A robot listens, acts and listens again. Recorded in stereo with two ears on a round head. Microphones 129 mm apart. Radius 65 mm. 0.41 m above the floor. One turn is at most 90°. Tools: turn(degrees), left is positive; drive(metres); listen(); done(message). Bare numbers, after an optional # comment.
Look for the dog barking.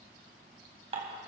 listen()
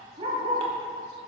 # The dog barking: about 40° right or 140° right.
turn(-40)
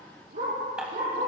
# So it is at 115° right.
turn(-90)
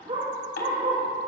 # The dog barking is now 35° right.
turn(-35)
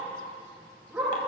# The dog barking is now 10° right.
turn(-10)
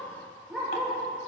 done("Facing the dog barking.")